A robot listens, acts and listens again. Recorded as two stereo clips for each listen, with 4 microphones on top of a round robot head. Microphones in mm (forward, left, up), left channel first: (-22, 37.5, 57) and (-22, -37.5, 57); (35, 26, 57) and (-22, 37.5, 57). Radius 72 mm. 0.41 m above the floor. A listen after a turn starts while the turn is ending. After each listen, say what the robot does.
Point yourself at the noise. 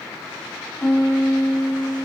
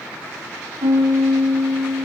Turn 170° left.
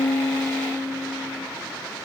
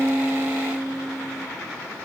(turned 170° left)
Turn 10° right.
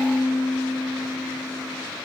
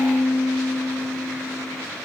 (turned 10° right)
Found it: a piano, straight ahead.